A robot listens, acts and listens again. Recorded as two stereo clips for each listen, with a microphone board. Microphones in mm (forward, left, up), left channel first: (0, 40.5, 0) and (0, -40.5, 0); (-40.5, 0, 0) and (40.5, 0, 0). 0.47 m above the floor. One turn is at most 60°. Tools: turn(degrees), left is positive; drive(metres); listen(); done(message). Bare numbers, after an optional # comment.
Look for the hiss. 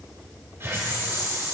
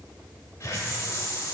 # The hiss: 140° right.
turn(-60)
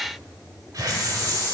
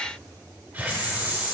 # The hiss is now 60° right.
turn(-60)
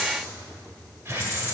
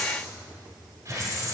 # The hiss is now 35° right.
turn(-35)
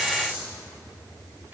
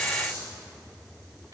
# The hiss is now 25° right.
turn(-25)
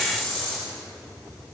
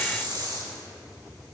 # The hiss is now 10° left.
turn(10)
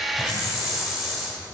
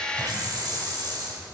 done("Found it: a hiss, straight ahead.")